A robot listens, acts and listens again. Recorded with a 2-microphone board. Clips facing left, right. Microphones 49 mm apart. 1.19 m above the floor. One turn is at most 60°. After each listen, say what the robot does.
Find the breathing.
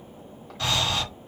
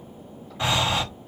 Turn 20° right.
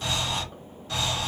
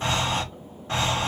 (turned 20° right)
Turn 60° right.
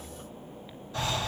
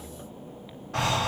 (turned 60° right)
Turn 60° right.
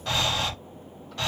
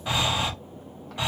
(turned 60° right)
Turn 15° right.
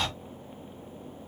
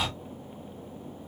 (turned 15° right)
Turn 10° right.
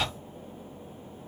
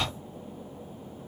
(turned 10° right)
Facing the breathing, under 1 m away.